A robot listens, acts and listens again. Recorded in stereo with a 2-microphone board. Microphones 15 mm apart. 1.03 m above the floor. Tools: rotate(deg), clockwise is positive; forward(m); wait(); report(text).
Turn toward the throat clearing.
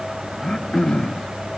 rotate(-55)
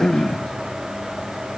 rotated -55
rotate(-65)
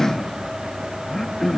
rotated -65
rotate(-25)
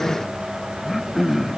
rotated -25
report("Facing the throat clearing.")